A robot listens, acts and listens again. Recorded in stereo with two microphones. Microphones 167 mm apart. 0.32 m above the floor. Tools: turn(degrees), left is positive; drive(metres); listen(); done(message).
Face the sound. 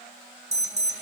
turn(degrees=-45)
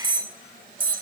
turn(degrees=-80)
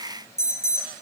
turn(degrees=20)
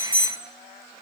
turn(degrees=10)
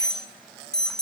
done("Facing the alarm, 1 to 2 m away.")